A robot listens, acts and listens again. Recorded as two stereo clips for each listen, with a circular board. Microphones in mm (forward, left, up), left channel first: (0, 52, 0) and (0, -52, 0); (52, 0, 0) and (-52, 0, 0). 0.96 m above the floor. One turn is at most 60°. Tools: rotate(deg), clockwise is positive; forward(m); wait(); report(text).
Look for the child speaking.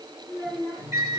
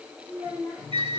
rotate(45)
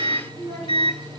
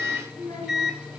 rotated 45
rotate(-15)
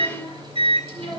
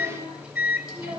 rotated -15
rotate(-10)
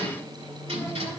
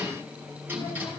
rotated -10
wait()
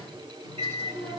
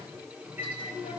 wait()
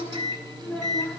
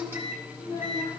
rotate(-10)
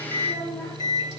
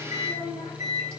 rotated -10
report("Facing the child speaking, over 4 m away.")